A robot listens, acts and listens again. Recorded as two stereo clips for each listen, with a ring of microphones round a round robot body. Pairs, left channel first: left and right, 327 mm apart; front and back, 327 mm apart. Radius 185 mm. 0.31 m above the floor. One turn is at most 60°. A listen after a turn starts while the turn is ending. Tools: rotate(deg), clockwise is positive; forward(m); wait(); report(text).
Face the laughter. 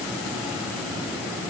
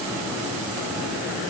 wait()
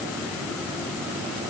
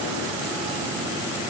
wait()
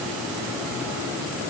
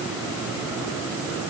report("I can't make out laughter.")